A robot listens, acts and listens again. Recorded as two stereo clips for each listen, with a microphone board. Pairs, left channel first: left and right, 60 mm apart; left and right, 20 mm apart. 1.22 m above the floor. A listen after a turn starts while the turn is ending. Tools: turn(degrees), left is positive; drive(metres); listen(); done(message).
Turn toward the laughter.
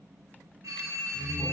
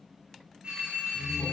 turn(degrees=30)
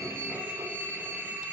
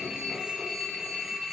listen()
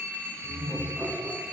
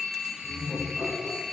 turn(degrees=30)
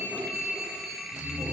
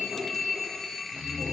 turn(degrees=-15)
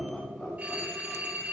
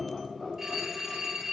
done("Found it: laughter, straight ahead.")